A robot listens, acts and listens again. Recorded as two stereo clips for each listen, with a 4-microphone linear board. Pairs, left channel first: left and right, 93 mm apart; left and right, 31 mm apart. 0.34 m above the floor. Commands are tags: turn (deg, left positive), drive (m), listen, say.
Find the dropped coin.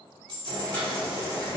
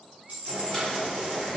<turn deg="-50"/>
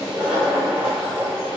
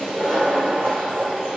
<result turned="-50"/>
<listen/>
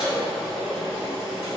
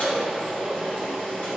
<say>I heard a dropped coin, but can't make it out now. It was about straight ahead or 80° right.</say>